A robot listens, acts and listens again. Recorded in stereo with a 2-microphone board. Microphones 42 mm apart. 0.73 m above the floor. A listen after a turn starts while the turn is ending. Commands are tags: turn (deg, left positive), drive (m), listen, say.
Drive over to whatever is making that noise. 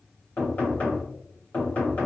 <turn deg="35"/>
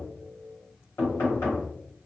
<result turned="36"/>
<turn deg="105"/>
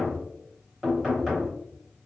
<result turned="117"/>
<turn deg="-10"/>
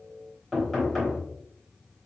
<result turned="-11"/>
<drive m="1.0"/>
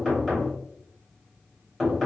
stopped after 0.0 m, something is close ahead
<say>Something is in my way. I am facing the knocking but have not reached it.</say>